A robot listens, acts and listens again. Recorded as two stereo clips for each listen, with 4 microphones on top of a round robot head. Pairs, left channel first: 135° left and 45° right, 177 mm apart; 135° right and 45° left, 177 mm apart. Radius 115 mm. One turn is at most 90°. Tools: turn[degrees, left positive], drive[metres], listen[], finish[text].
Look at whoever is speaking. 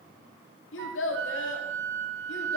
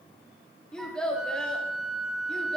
Thought: The child speaking: 135° left.
Action: turn[90]
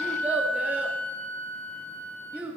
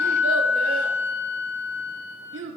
Thought: The child speaking is now 40° left.
Action: turn[40]
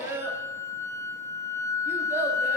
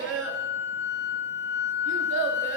Thought: The child speaking is now 35° left.
Action: turn[35]
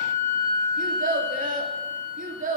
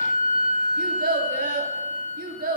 Action: finish[Found it: a child speaking, straight ahead.]